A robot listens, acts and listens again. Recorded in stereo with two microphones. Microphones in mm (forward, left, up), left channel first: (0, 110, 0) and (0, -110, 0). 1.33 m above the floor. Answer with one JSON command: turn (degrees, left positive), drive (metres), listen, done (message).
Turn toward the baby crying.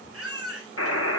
{"turn": -90}
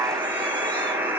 {"listen": true}
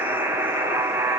{"listen": true}
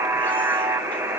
{"done": "Facing where the baby crying came from. I can't hear it now."}